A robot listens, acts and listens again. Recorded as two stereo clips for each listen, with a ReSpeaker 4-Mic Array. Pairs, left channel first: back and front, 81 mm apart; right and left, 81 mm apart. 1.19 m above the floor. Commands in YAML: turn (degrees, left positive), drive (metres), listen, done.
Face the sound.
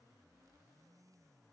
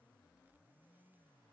listen: true
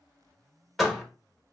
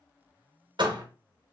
turn: 95
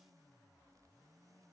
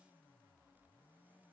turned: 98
done: "Facing where the door slam came from. I can't hear it now."